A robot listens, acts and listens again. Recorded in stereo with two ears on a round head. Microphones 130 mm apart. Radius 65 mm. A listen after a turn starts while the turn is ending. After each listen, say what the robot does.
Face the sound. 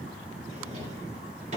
Turn 50° right.
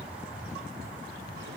Keep listening.
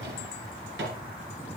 Turn 80° right.
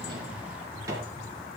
Turn 20° right.
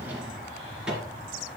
Found it: a drawer, straight ahead, 2 to 4 m away.